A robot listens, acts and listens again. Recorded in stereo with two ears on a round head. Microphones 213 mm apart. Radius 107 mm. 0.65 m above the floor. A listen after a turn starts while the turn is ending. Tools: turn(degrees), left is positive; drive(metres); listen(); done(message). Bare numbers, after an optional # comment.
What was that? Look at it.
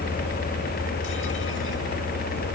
listen()
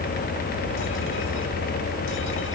listen()
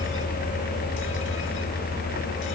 done("I can't make out anything to turn to.")